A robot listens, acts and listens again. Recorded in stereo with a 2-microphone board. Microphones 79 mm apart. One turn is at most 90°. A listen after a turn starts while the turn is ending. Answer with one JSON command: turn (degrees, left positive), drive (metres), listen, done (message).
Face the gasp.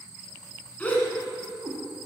{"turn": 20}
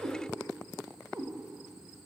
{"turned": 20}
{"listen": true}
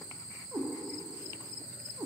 {"done": "I heard a gasp, but can't make it out now. It was about straight ahead or 140° left."}